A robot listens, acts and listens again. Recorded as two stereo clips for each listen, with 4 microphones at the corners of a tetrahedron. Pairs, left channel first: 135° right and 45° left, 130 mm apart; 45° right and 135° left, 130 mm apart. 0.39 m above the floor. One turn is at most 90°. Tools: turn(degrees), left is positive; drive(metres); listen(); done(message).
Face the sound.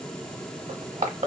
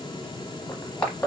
turn(degrees=30)
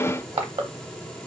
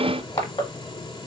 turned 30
done("Facing the crushing, under 1 m away.")